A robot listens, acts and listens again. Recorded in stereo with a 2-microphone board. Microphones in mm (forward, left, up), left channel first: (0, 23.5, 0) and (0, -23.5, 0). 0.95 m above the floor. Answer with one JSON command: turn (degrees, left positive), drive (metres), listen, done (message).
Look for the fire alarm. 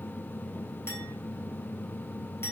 {"listen": true}
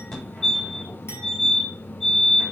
{"turn": 15}
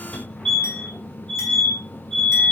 {"turn": 150}
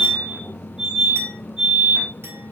{"turn": -20}
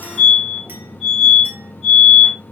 {"done": "Facing the fire alarm."}